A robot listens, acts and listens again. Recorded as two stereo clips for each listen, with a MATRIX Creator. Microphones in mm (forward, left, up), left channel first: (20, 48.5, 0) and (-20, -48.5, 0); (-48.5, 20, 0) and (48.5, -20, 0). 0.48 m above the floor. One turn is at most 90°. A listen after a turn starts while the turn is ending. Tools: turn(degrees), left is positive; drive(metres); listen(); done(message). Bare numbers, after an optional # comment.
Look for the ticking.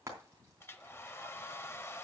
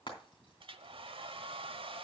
listen()
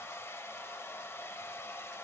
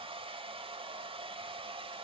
listen()
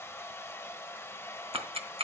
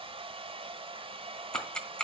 # The ticking: 120° right.
turn(-90)
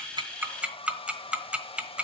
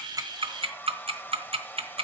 # The ticking is now 35° right.
turn(-35)
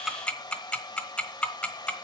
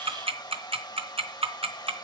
# The ticking is now 10° right.
turn(-10)
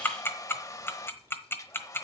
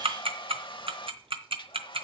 done("Facing the ticking.")